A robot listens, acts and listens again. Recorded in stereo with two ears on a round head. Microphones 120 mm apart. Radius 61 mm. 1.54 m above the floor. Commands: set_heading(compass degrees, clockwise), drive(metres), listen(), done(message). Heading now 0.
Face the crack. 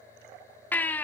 listen()
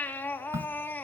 set_heading(20)
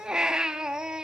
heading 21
listen()
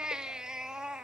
done("I heard a crack, but can't make it out now. It was about straight ahead or 140° right.")